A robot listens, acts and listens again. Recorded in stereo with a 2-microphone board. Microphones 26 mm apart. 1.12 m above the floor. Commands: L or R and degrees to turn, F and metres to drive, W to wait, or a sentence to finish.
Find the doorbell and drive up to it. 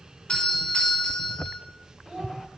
L40
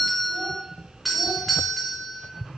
F1.0
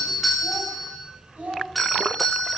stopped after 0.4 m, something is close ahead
Blocked. The doorbell is further on, straight ahead.